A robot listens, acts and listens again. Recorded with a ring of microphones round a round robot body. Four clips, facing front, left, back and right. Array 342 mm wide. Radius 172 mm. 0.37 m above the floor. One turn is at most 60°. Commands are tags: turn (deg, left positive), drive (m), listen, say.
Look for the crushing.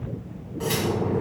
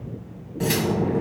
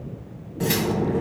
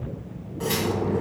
<listen/>
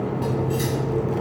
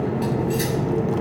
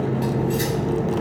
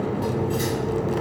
<listen/>
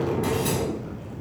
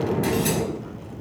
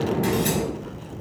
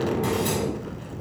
<say>I can't make out crushing, only cutlery clinking.</say>